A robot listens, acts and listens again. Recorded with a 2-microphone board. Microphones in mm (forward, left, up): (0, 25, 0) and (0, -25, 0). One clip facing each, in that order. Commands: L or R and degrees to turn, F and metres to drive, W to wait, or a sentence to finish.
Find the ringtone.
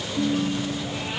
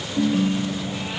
R45
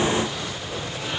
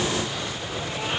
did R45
W
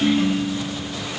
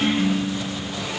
Facing the ringtone.